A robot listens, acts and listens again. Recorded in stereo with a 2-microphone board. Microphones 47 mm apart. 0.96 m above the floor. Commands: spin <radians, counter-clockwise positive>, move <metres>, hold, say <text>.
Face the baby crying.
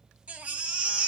spin -0.44
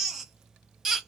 say Facing the baby crying.